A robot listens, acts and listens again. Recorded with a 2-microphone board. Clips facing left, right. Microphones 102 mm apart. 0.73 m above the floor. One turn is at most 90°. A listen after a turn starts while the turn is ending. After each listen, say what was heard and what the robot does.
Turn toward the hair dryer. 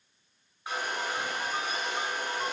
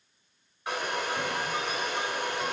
Turn 90° right.
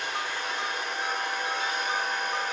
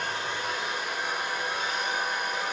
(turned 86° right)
Found it: a hair dryer, straight ahead.